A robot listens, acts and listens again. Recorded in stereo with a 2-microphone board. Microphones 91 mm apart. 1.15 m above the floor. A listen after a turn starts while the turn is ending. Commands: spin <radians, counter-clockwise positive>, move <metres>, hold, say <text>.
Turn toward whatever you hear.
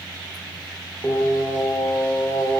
spin 0.44
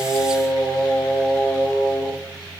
say Found it: singing, straight ahead.